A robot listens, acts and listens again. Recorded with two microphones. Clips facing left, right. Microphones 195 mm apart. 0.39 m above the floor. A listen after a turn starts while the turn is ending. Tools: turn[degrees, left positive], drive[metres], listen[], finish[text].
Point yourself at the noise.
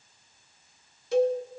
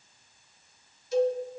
Action: turn[90]
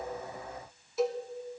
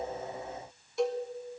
Action: finish[Found it: a cowbell, straight ahead, 1 to 2 m away.]